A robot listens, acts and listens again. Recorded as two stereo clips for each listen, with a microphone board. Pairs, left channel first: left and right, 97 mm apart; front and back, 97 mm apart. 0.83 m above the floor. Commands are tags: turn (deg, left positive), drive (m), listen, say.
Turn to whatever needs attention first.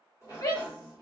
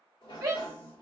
<turn deg="125"/>
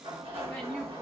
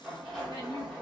<listen/>
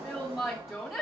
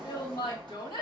<say>Found it: a shout, straight ahead, 1 to 2 m away.</say>